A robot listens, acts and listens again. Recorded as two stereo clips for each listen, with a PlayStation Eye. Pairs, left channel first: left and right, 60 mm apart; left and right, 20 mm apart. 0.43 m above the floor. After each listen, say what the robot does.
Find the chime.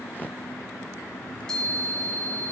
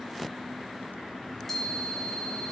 Turn 30° left.
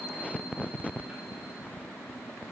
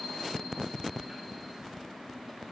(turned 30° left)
Keep listening.
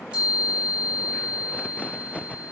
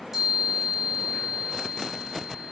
Turn 20° right.
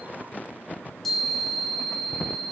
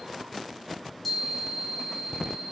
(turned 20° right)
Found it: a chime, straight ahead, over 4 m away.